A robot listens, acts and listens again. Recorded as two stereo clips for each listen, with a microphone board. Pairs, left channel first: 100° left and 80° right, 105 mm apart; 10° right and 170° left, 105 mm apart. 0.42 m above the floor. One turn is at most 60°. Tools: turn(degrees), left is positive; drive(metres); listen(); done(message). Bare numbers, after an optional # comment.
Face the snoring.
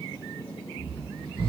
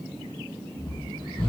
# The snoring: 50° right.
turn(-50)
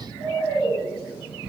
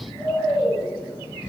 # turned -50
done("Facing the snoring, 1 to 2 m away.")